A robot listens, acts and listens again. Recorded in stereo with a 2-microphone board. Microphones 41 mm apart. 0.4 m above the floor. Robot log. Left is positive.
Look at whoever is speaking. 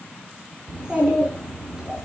note: The child speaking: about 20° right or 160° right.
cmd yaw -20
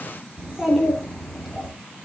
end: Found it: a child speaking, straight ahead.